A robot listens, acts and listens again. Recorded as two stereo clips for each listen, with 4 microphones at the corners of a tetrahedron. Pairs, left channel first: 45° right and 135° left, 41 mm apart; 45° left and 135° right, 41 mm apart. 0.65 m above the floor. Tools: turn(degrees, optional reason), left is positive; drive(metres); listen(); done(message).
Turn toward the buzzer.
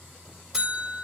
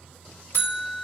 turn(degrees=55, reason="The buzzer: 55° left.")
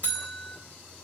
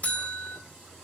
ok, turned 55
done("Facing the buzzer.")